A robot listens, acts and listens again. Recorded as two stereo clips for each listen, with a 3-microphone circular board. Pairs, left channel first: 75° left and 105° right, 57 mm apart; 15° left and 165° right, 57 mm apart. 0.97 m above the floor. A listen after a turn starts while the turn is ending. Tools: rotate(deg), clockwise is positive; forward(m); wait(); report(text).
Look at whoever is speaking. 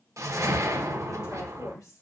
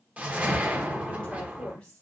rotate(-85)
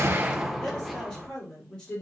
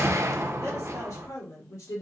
report("Found it: a woman speaking, straight ahead, 2 to 4 m away.")